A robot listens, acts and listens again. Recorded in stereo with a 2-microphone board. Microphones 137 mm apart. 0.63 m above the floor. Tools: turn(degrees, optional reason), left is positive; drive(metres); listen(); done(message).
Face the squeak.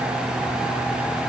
listen()
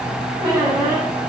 turn(degrees=-35, reason="The squeak: about 35° right or 145° right.")
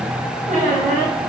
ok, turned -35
turn(degrees=-110, reason="So it is at 110° right.")
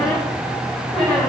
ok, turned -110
done("Found it: a squeak, straight ahead, 2 to 4 m away.")